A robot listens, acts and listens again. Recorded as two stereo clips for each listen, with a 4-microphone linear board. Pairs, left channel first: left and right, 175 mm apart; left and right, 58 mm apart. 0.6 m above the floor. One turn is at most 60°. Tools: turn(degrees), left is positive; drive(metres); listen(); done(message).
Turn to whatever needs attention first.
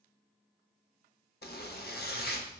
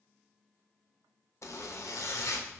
listen()
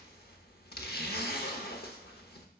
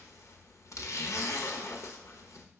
listen()
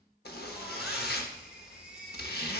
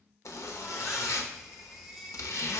turn(degrees=-30)
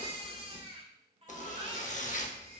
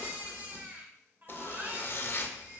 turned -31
turn(degrees=-60)
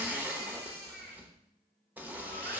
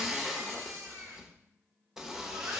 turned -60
turn(degrees=-60)
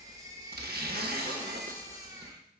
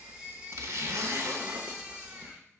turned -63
turn(degrees=-20)
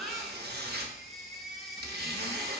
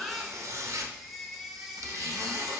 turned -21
done("Found it: a baby crying, straight ahead.")